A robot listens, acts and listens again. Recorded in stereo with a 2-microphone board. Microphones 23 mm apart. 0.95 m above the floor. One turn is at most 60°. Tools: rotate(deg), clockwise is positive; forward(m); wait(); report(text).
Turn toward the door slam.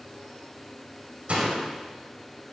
rotate(60)
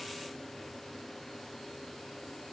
wait()
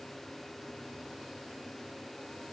report("I heard a door slam, but can't make it out now. It was about 10° right or 50° right.")